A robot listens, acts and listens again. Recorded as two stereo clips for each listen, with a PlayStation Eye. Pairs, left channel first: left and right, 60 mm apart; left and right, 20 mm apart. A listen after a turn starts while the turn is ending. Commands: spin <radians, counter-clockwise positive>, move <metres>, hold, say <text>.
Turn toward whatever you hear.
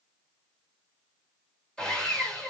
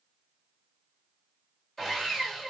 spin 0.52
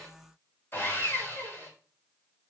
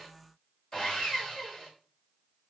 spin 2.44
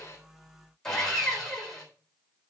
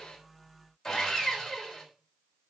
spin 0.17
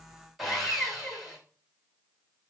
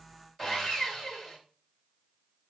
say Found it: sawing, straight ahead, 2 to 4 m away.